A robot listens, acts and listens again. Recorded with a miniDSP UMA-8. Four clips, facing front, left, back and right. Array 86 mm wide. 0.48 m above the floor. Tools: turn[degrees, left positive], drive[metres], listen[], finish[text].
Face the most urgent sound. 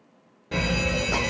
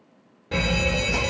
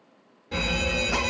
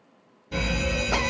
Thought: The alarm: 65° left.
Action: turn[65]
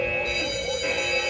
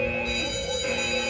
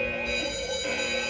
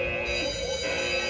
Action: finish[Facing the alarm, 1 to 2 m away.]